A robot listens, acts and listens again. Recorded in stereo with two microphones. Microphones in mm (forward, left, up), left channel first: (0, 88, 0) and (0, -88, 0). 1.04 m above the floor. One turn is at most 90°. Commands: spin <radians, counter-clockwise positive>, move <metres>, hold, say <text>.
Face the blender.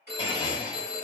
spin 0.44
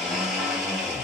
say Facing the blender.